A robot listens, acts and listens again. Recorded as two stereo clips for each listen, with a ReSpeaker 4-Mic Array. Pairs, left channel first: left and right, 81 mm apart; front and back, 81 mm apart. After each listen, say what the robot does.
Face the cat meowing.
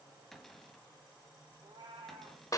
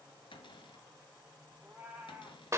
Turn 100° right.
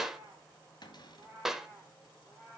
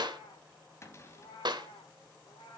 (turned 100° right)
Facing the cat meowing.